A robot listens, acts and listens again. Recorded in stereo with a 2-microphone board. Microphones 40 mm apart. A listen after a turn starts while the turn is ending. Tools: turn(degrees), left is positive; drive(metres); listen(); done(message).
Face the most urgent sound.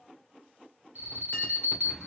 turn(degrees=-55)
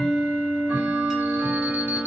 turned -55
listen()
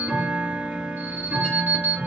turn(degrees=-60)
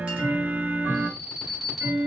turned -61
done("Found it: an alarm, straight ahead.")